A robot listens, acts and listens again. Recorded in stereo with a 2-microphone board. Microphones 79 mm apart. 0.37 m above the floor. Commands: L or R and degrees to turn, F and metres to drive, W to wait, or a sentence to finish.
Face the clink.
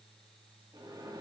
W
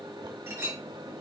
R35
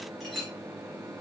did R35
Found it: a clink, straight ahead, 2 to 4 m away.